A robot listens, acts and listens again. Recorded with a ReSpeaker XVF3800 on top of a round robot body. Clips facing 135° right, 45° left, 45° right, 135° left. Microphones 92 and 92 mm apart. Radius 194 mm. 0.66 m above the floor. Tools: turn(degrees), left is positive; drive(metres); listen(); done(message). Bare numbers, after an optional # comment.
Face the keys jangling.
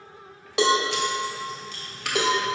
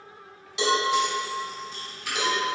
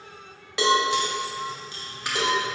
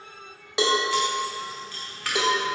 # The keys jangling: 115° right.
turn(-115)
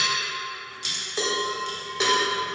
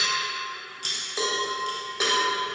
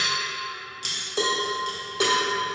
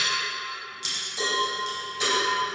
done("Found it: keys jangling, straight ahead, 1 to 2 m away.")